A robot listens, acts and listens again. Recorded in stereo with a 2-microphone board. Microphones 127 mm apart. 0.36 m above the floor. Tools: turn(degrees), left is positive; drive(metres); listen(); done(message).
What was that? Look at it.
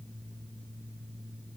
listen()
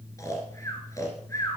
turn(degrees=25)
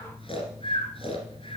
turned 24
turn(degrees=135)
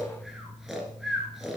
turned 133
done("Found it: snoring, straight ahead, 2 to 4 m away.")